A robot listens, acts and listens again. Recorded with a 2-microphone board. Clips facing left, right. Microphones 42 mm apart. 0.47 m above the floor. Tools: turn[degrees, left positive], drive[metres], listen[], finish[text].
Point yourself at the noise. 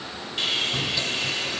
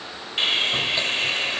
Thought: The sawing: about 35° right or 145° right.
Action: turn[-35]
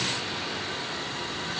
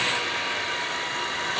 Thought: So it is at 105° right.
Action: turn[-105]
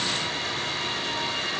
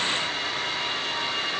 Action: finish[Facing the sawing, 1 to 2 m away.]